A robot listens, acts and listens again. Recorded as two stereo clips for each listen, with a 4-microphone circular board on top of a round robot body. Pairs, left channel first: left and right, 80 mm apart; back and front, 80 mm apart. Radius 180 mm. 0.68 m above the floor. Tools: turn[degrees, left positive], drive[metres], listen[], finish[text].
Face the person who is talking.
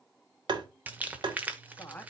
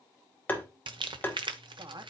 Thought: The woman speaking: 15° left.
Action: turn[15]
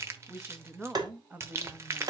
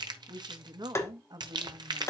Thought: The woman speaking is now 20° right.
Action: turn[-20]
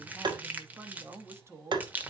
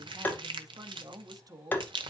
Thought: The woman speaking is now 35° right.
Action: turn[-35]
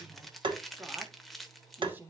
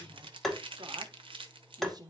Thought: The woman speaking is now 25° right.
Action: turn[-25]
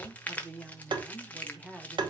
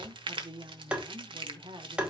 Thought: The woman speaking is now 10° right.
Action: turn[-10]
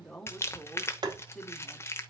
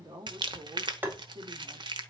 Action: finish[Found it: a woman speaking, straight ahead, 1 to 2 m away.]